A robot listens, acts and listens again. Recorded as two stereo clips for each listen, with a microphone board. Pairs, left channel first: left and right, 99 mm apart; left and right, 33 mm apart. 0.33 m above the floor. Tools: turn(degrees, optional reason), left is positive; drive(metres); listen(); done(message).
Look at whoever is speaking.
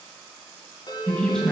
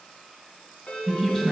turn(degrees=30)
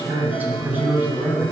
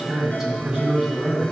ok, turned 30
turn(degrees=-20, reason="So it is at 20° right.")
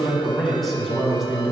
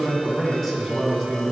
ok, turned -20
done("Facing the man speaking, 2 to 4 m away.")